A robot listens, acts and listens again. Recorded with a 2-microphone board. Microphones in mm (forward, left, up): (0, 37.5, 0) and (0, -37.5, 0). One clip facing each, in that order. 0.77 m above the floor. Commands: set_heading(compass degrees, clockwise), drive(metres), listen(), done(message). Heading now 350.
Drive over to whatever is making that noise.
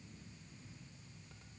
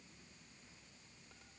listen()
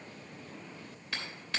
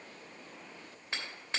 set_heading(15)
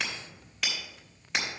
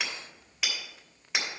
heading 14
drive(1.0)
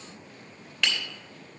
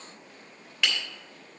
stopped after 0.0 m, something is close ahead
done("Blocked. The hammering is further on, straight ahead.")